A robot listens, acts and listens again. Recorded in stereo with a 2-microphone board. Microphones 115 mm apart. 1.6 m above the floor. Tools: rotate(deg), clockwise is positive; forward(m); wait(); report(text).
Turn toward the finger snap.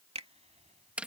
rotate(65)
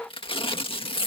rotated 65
wait()
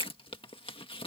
wait()
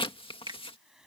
rotate(45)
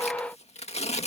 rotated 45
wait()
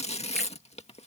wait()
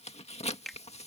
report("Found it: a finger snap, straight ahead.")